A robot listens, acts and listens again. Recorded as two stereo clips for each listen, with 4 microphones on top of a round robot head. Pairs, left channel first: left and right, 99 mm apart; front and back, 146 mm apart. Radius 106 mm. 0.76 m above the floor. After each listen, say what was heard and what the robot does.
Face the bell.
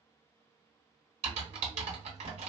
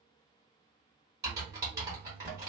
Keep listening.
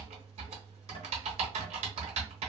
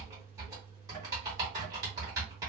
Keep listening.
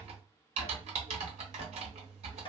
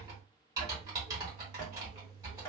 I can't make out a bell to turn to.